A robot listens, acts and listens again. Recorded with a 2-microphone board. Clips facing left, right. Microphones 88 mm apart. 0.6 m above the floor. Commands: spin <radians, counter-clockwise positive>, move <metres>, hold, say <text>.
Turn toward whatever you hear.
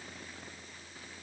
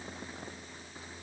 hold
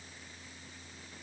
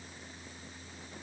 hold
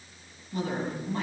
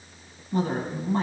spin -0.61
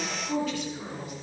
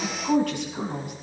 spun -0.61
spin -2.09
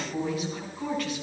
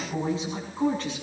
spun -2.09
spin -0.52
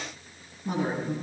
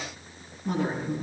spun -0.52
say Found it: a woman speaking, straight ahead, over 4 m away.